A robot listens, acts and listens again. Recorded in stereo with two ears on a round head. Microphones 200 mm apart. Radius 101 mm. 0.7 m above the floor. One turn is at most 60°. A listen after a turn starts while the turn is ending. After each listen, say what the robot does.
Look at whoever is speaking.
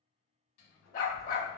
Turn 30° left.
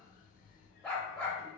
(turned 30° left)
Turn 30° right.
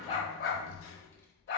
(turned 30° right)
Turn 15° left.
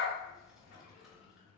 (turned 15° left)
Found it: a child speaking, straight ahead, under 1 m away.